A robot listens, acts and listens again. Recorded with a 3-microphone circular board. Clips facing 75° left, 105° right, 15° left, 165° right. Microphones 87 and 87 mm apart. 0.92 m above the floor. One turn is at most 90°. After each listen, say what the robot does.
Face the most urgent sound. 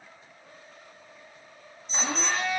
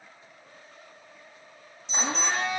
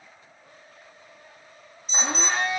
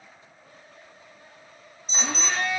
Turn 90° right.
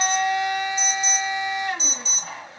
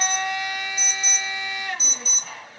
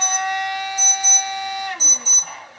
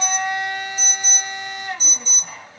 Turn 55° right.
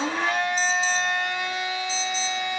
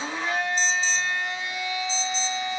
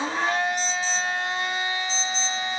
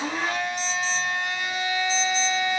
Keep listening.
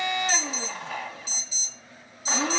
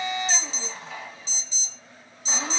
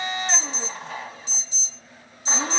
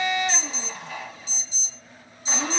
Facing the alarm, 1 to 2 m away.